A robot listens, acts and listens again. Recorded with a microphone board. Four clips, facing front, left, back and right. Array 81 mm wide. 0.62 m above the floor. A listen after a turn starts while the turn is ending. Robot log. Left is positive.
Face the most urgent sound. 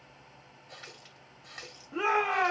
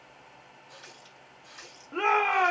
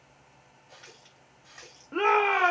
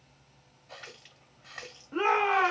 note: The shout: 170° left.
cmd yaw +170
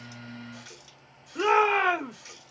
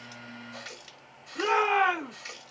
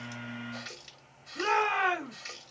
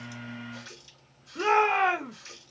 end: Facing the shout.